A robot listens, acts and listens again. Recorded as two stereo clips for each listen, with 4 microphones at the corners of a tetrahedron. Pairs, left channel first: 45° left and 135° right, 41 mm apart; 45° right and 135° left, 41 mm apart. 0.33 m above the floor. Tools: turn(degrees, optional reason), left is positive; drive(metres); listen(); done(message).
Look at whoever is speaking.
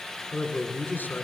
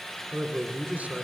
turn(degrees=85, reason="The man speaking: 85° left.")
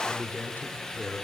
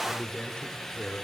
turn(degrees=20, reason="The man speaking is now 20° left.")
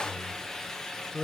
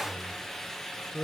done("Found it: a man speaking, straight ahead, 2 to 4 m away.")